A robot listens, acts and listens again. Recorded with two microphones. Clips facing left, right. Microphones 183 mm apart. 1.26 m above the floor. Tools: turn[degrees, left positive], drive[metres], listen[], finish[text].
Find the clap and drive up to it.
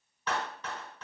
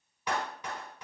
Action: turn[-30]
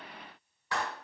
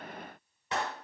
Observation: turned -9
Thought: The clap: about 20° right or 160° right.
Action: turn[-20]
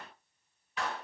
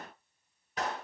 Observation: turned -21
Thought: So it is at 140° right.
Action: turn[-140]
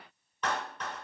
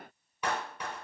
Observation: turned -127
Thought: The clap is now 10° right.
Action: turn[-10]
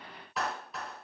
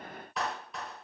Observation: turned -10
Action: drive[1.0]
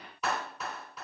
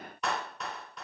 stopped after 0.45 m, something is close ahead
Action: finish[Something is in my way. I am facing the clap but have not reached it.]